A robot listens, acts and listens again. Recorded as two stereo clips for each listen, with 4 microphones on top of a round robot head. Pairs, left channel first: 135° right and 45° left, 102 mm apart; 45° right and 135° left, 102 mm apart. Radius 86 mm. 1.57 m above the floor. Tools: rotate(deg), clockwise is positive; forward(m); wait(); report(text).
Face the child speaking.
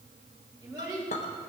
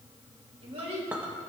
rotate(-105)
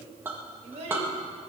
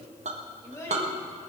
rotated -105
rotate(-15)
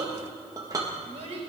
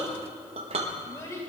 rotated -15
rotate(-15)
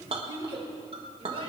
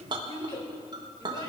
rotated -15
report("Facing the child speaking.")